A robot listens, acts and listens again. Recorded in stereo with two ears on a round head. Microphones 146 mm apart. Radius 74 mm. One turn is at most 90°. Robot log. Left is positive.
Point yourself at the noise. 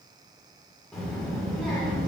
cmd yaw +30
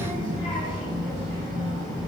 note: So it is at 145° left.
cmd yaw +90
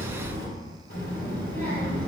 note: The child speaking is now 55° left.
cmd yaw +55
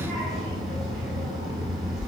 end: Found it: a child speaking, straight ahead.